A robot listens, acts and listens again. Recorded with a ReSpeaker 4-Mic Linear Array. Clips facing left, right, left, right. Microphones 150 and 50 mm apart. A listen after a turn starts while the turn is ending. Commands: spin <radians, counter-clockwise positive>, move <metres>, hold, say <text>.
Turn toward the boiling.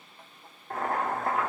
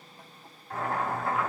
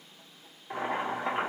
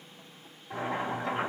spin 0.87
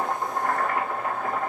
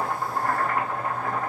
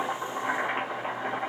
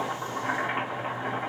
say Found it: boiling, straight ahead, 1 to 2 m away.